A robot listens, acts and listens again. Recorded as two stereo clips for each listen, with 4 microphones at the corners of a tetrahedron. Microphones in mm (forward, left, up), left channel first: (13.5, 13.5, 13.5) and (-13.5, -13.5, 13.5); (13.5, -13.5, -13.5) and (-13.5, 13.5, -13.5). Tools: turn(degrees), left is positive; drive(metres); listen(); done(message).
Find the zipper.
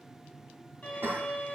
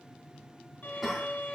listen()
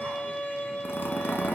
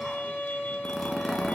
turn(degrees=45)
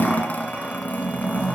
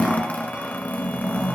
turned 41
done("Found it: a zipper, straight ahead.")